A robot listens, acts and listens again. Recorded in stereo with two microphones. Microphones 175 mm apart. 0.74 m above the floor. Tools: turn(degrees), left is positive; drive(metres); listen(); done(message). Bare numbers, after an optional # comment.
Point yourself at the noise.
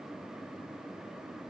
listen()
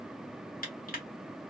# The crushing: about 55° left or 125° left.
turn(55)
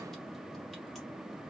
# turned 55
listen()
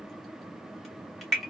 done("Facing the crushing.")